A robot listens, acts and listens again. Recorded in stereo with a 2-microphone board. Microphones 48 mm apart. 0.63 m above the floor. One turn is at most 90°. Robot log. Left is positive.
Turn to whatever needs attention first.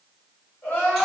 note: The crying: about 60° left or 120° left.
cmd yaw +60
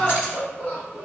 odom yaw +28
note: So it is at 50° left.
cmd yaw +50
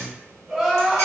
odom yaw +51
end: Found it: crying, straight ahead.